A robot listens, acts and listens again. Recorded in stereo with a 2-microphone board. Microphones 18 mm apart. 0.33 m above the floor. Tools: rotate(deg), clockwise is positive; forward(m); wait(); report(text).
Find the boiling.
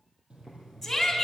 rotate(90)
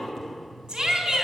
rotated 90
wait()
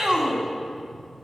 wait()
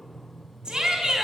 report("Facing the boiling, 2 to 4 m away.")